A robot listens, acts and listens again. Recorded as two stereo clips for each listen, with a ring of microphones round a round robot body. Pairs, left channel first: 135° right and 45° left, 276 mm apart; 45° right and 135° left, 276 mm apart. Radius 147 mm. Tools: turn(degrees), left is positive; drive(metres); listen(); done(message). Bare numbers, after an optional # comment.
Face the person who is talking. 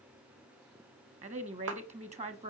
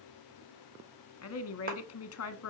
# The woman speaking: 20° right.
turn(-20)
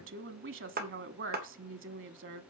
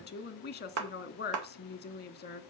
done("Facing the woman speaking.")